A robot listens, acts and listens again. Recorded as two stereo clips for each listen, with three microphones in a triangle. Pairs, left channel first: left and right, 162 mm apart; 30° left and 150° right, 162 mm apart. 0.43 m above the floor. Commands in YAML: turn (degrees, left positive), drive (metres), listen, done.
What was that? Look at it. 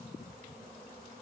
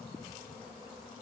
listen: true
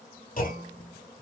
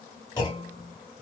turn: 90
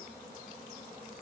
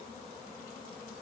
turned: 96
done: "I heard a clunk from this way, but can't make it out now."